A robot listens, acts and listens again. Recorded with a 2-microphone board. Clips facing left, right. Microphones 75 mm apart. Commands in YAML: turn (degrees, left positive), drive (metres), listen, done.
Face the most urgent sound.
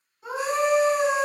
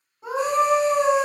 turn: -45
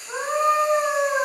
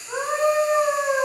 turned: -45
done: "Facing the scream."